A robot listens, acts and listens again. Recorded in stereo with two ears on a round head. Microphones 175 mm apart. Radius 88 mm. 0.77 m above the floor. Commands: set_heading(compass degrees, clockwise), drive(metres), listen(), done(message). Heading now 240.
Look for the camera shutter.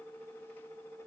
listen()
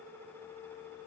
listen()
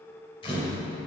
set_heading(215)
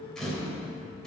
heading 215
done("Found it: a camera shutter, straight ahead, 2 to 4 m away.")